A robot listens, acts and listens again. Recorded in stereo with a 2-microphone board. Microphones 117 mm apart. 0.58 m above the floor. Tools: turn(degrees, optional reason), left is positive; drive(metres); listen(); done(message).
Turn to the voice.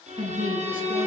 turn(degrees=-45, reason="The woman speaking: about 45° right or 135° right.")
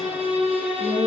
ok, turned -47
listen()
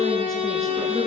listen()
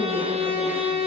done("I heard a woman speaking, but can't make it out now. It was about straight ahead or 85° right.")